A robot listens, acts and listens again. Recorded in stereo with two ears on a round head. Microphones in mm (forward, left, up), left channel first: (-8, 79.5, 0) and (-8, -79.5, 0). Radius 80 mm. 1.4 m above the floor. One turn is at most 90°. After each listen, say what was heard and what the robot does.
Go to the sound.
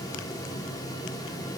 Keep listening.
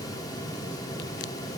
Keep listening.
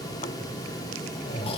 The snoring: about 30° left or 150° left. Turn 30° left.
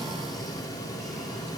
Keep listening.
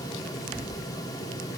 Drive 1.0 m forward.
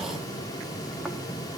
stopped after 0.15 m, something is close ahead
Keep listening.
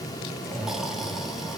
Blocked. The snoring is further on, straight ahead.